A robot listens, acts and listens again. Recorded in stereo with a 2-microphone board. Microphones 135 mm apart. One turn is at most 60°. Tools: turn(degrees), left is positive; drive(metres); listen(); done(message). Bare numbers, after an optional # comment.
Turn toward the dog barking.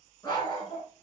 # The dog barking: about 35° left or 145° left.
turn(35)
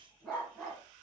done("Facing the dog barking, 2 to 4 m away.")